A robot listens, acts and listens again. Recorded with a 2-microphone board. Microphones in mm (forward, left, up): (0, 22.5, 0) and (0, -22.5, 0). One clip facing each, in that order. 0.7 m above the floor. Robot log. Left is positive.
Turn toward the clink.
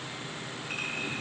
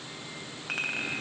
cmd yaw -90
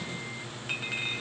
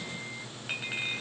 end: Facing the clink, 2 to 4 m away.